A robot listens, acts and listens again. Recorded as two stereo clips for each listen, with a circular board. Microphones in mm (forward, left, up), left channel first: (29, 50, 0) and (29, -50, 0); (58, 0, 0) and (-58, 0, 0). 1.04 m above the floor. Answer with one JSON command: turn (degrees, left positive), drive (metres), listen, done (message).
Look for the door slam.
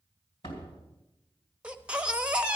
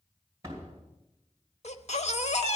{"turn": 120}
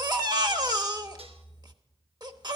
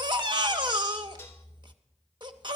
{"done": "I heard a door slam from this way, but can't make it out now."}